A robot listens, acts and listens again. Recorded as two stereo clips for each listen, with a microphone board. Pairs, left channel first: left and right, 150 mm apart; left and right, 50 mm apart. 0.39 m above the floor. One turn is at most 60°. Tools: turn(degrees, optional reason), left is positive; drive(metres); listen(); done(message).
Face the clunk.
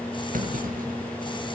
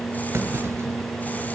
turn(degrees=-60, reason="The clunk: about 65° right or 115° right.")
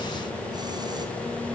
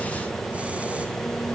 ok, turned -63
listen()
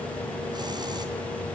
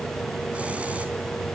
done("I heard a clunk, but can't make it out now. It was about straight ahead or 55° right.")